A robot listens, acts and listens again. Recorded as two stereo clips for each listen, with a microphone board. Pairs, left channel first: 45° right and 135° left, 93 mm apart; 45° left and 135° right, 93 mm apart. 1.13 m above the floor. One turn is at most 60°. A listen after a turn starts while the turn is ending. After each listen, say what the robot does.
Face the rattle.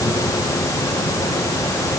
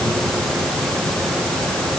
Keep listening.
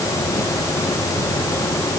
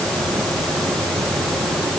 Keep listening.
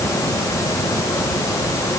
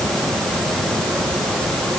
I can't make out a rattle.